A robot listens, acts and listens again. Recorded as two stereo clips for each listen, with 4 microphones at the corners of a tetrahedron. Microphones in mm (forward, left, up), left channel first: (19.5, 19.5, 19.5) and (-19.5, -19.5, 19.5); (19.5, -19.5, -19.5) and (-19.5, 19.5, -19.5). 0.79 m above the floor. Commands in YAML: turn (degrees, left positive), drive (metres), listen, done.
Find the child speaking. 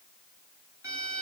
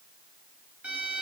listen: true
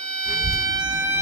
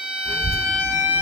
turn: 160
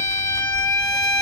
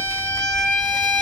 turn: 55
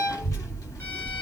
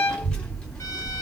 turn: 20
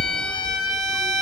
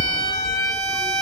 done: "Facing the child speaking."